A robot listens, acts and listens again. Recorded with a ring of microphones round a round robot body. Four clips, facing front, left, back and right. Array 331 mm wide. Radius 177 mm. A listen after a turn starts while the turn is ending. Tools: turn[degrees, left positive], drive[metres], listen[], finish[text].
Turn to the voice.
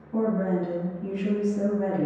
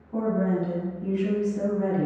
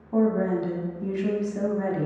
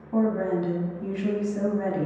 Thought: The woman speaking: 140° right.
Action: turn[-140]
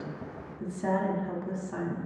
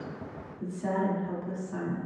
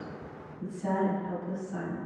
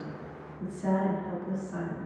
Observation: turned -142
Action: finish[Found it: a woman speaking, straight ahead, 1 to 2 m away.]